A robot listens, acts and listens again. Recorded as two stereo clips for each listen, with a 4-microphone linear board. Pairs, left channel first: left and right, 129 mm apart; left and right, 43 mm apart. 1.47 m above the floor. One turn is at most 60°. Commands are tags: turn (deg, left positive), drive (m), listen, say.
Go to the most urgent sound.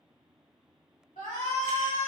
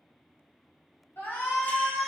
<turn deg="60"/>
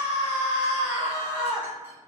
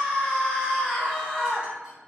<turn deg="20"/>
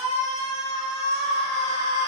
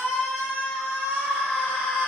<drive m="1.0"/>
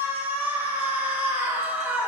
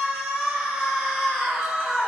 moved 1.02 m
<turn deg="-10"/>
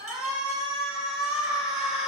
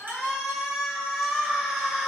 <drive m="1.0"/>
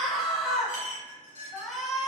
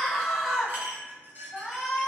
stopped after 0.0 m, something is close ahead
<say>I am next to the shout.</say>